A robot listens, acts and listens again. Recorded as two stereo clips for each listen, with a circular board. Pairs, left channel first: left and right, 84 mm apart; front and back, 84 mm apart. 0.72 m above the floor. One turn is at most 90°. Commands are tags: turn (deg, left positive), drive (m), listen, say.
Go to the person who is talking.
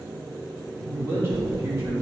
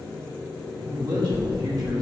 <turn deg="-90"/>
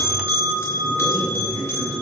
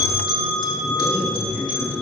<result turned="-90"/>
<turn deg="-55"/>
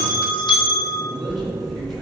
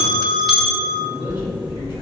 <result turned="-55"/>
<drive m="1.0"/>
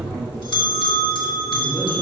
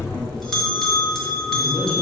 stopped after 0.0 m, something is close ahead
<say>Something is in my way. I am facing the man speaking but have not reached it.</say>